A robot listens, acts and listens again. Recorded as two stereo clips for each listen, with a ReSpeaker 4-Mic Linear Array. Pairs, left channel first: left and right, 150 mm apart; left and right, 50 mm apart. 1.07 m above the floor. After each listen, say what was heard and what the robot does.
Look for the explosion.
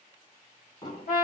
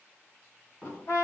The explosion: about 30° left or 150° left. Turn 30° left.
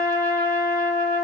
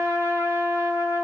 Keep listening.
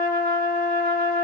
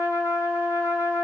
I heard an explosion, but can't make it out now. It was about straight ahead or 120° left.